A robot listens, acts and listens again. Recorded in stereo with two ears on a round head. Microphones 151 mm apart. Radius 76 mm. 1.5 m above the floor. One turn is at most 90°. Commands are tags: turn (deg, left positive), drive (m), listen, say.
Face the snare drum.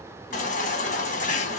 <listen/>
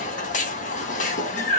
<listen/>
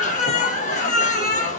<say>I can't make out a snare drum, only a baby crying.</say>